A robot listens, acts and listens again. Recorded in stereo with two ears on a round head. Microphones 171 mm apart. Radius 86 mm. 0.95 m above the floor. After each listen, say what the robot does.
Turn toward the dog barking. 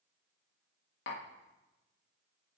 Keep listening.
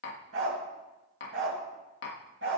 Turn 90° right.
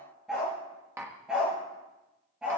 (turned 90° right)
Facing the dog barking.